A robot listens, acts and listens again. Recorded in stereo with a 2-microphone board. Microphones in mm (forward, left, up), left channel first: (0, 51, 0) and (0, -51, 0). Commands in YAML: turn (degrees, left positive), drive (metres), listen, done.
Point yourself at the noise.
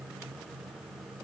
listen: true
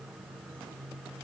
listen: true
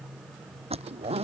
turn: -90
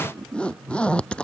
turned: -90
turn: 10
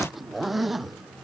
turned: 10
done: "Facing the zipper."